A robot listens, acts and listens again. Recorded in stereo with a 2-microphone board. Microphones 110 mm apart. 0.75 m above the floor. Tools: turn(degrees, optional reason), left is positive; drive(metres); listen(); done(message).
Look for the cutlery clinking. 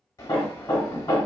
listen()
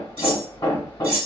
turn(degrees=-55, reason="The cutlery clinking: about 55° right or 125° right.")
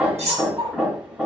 turn(degrees=-70, reason="So it is at 70° right.")
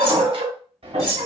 done("Found it: cutlery clinking, straight ahead.")